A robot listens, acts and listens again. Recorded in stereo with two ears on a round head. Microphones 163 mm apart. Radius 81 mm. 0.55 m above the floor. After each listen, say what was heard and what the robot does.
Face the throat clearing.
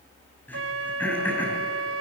Turn 30° left.
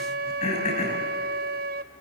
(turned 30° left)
So it is at 140° left. Turn 140° left.
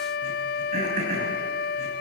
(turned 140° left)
The throat clearing is now 40° right. Turn 40° right.
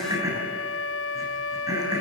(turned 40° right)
The throat clearing is now 20° right. Turn 20° right.
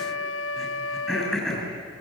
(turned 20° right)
Facing the throat clearing, over 4 m away.